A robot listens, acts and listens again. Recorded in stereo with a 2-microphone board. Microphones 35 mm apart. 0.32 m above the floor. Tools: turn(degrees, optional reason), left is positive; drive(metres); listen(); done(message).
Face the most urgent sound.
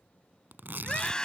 turn(degrees=20, reason="The scream: about 20° left or 160° left.")
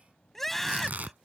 done("Facing the scream.")